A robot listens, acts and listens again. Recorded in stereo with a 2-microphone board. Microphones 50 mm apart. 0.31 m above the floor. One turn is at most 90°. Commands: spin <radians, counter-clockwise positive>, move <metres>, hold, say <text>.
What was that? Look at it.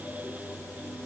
hold
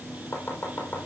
spin 0.87
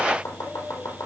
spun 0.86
spin 1.40
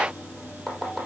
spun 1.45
say Found it: chopping, straight ahead, over 4 m away.